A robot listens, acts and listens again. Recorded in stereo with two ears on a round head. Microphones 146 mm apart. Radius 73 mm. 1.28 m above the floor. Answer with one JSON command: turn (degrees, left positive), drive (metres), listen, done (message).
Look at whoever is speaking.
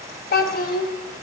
{"turn": 60}
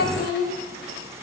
{"turn": 60}
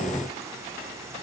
{"listen": true}
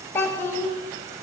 {"turn": 15}
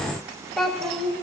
{"done": "Facing the child speaking."}